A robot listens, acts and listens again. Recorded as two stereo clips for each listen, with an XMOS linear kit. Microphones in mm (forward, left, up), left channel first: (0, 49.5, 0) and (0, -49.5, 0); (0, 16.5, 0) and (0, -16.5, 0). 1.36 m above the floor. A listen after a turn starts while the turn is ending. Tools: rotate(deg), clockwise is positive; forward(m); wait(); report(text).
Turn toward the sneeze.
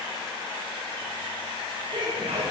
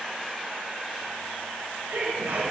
rotate(90)
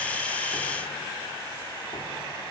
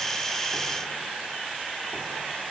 report("Facing where the sneeze came from. I can't hear it now.")